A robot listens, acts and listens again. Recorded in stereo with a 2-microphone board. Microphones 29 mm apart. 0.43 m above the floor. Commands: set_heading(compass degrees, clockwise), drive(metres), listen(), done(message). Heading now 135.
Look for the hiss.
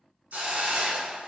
set_heading(225)
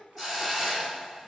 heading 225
set_heading(235)
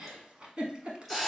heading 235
done("Found it: a hiss, straight ahead.")